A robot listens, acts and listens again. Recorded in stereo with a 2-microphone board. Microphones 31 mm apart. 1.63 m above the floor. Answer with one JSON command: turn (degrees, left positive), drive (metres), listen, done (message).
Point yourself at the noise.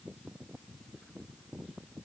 {"listen": true}
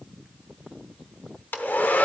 {"turn": 70}
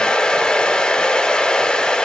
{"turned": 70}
{"turn": 30}
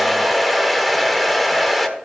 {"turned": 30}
{"done": "Facing the hair dryer."}